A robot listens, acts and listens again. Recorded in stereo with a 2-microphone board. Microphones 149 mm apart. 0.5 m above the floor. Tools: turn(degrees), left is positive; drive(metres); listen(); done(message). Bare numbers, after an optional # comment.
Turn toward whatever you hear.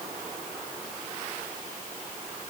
listen()
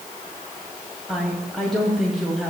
turn(30)
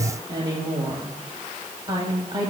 # So it is at 30° right.
turn(-30)
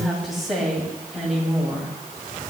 done("Facing the woman speaking, 2 to 4 m away.")